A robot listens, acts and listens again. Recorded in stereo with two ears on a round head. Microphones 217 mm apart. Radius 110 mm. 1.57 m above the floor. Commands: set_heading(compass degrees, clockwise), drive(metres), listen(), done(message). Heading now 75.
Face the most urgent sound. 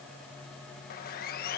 listen()
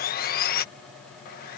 listen()
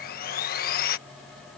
done("I can't make out anything urgent to turn to.")